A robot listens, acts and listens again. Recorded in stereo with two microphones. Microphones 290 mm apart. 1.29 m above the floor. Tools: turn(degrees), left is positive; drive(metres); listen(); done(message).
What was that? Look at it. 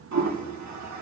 turn(degrees=-70)
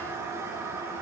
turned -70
turn(degrees=-10)
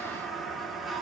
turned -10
done("Found it: a toilet flushing, straight ahead, 1 to 2 m away.")